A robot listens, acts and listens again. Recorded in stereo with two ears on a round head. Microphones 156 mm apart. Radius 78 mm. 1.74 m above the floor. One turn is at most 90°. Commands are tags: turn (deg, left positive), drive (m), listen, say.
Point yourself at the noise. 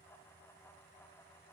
<listen/>
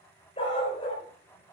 <turn deg="35"/>
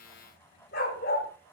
<turn deg="90"/>
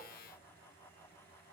<turn deg="30"/>
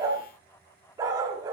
<turn deg="-20"/>
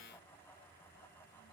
<listen/>
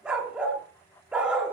<say>Facing the dog barking.</say>